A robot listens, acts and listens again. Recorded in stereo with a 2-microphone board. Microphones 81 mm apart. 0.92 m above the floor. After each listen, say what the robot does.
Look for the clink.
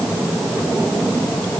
Keep listening.
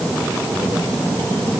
Keep listening.
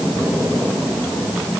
I can't make out a clink to turn to.